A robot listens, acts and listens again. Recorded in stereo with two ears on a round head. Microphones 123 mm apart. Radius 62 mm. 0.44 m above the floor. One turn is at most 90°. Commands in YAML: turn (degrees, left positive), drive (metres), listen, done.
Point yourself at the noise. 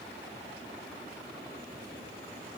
listen: true
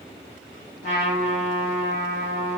turn: 55
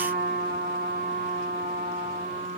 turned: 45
turn: 75
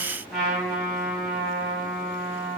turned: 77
done: "Facing the trumpet, 2 to 4 m away."